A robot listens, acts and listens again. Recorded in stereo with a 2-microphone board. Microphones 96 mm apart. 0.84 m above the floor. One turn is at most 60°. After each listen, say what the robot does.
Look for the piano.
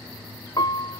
Turn 45° left.
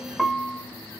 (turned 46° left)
Found it: a piano, straight ahead, under 1 m away.